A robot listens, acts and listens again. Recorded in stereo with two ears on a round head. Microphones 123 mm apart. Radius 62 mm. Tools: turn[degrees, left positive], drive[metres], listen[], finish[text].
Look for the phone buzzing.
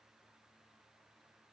Action: listen[]
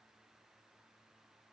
Action: listen[]
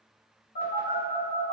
Thought: The phone buzzing: about 65° left or 115° left.
Action: turn[65]
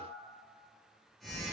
Action: finish[Found it: a phone buzzing, straight ahead.]